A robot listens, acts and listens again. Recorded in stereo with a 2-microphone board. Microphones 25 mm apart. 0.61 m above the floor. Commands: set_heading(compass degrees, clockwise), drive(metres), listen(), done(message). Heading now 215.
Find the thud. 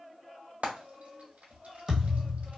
set_heading(235)
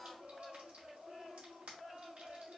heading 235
listen()
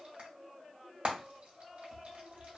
done("I heard a thud, but can't make it out now. It was about straight ahead or 140° right.")